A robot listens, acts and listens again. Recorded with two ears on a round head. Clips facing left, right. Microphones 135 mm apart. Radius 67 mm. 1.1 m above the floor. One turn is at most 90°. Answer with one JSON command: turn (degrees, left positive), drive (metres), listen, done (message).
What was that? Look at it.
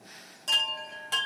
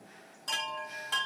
{"turn": 30}
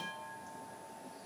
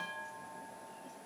{"turn": 10}
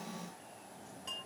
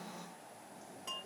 {"done": "Facing the chime, 1 to 2 m away."}